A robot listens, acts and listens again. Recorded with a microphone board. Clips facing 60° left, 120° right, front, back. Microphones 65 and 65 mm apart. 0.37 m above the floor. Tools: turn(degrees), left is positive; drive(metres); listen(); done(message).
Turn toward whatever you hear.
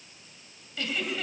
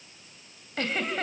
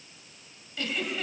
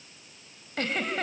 turn(degrees=-150)
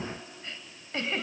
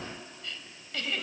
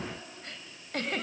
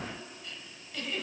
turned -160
done("Facing the giggle.")